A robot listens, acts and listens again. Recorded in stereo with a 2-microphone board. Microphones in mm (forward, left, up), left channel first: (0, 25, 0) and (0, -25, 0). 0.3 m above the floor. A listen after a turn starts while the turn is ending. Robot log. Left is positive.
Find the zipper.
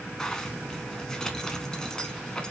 cmd yaw +30
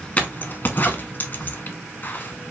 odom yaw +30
note: So it is at 135° left.
cmd yaw +135
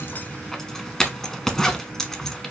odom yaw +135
note: The zipper is now 10° left.
cmd yaw +10
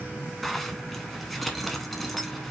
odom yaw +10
end: Found it: a zipper, straight ahead.